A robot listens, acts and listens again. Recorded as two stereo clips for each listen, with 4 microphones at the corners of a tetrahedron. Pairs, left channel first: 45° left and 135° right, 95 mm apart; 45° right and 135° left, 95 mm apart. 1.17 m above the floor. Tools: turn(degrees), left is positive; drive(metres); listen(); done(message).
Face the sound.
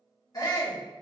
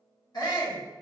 done("Found it: a shout, straight ahead.")